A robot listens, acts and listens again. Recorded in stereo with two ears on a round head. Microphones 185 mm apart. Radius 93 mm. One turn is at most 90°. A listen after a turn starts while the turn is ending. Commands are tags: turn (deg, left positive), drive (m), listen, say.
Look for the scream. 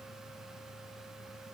<listen/>
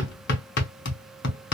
<listen/>
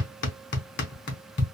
<say>I can't make out a scream to turn to.</say>